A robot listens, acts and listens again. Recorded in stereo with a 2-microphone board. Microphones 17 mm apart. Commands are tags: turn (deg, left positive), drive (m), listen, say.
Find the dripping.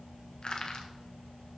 <listen/>
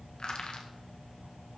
<listen/>
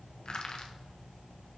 <say>I can't make out dripping to turn to.</say>